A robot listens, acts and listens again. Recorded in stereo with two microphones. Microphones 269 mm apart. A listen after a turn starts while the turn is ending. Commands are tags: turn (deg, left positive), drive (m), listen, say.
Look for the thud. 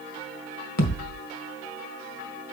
<turn deg="90"/>
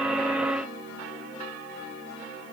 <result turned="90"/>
<say>Facing where the thud came from. I can't hear it now.</say>